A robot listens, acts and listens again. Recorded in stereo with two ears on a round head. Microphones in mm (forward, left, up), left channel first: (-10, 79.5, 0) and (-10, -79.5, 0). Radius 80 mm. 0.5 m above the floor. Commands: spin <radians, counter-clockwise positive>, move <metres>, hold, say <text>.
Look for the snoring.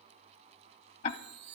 hold
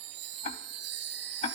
hold
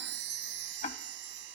say I can't make out snoring to turn to.